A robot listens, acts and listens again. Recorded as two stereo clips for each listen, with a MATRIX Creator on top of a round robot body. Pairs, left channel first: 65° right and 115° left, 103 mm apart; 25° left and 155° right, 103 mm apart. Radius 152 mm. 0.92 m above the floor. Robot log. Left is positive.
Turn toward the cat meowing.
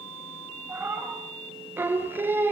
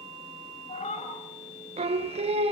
note: The cat meowing: 40° left.
cmd yaw +40
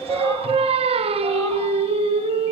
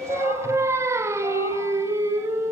cmd idle
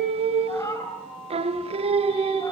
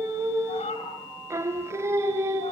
end: Facing the cat meowing.